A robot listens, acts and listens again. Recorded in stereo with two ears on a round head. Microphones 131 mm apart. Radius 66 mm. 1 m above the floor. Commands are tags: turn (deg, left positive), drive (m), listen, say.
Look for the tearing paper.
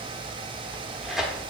<turn deg="30"/>
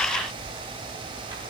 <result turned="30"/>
<listen/>
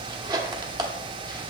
<turn deg="-30"/>
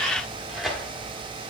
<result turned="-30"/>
<say>Found it: tearing paper, straight ahead, under 1 m away.</say>